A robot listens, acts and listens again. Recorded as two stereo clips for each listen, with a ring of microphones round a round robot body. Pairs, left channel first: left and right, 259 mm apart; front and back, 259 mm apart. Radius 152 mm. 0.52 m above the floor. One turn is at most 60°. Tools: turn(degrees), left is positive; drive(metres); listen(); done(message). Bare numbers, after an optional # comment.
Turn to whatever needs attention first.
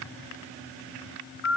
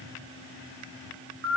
listen()
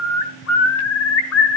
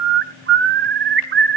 listen()
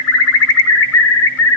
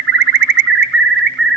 done("I can't make out anything urgent to turn to.")